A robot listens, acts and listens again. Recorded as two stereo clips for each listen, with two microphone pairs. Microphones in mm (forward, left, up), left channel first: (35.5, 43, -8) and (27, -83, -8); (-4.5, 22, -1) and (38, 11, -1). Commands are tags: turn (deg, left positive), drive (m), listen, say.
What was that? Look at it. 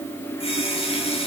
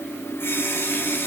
<turn deg="130"/>
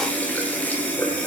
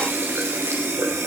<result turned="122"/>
<turn deg="10"/>
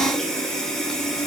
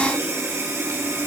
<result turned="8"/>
<say>Found it: a running tap, straight ahead.</say>